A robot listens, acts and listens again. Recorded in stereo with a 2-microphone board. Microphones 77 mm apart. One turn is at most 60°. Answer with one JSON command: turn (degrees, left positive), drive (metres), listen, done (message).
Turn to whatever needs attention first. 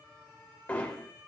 {"listen": true}
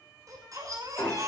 {"turn": -50}
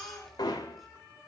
{"done": "Found it: a baby crying, straight ahead, over 4 m away."}